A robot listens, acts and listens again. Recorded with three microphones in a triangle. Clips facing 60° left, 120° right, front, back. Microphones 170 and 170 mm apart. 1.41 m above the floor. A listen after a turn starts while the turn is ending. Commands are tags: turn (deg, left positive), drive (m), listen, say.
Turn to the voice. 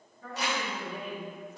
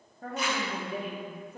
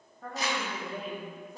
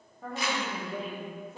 <turn deg="-95"/>
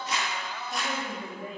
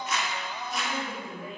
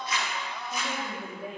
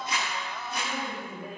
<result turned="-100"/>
<say>Facing the woman speaking.</say>